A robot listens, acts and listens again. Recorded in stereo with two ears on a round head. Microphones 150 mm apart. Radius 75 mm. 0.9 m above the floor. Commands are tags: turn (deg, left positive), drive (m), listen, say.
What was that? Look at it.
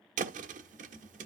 <turn deg="-45"/>
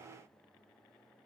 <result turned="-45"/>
<listen/>
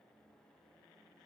<say>I heard a thud, but can't make it out now. It was about straight ahead or 90° right.</say>